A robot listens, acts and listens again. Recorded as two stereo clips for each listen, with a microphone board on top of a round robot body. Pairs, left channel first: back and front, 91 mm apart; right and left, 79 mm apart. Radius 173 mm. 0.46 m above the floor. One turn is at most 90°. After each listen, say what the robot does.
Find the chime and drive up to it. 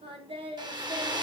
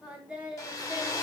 Keep listening.
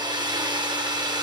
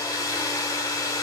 Keep listening.
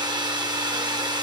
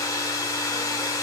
I can't make out a chime, only a hair dryer and singing.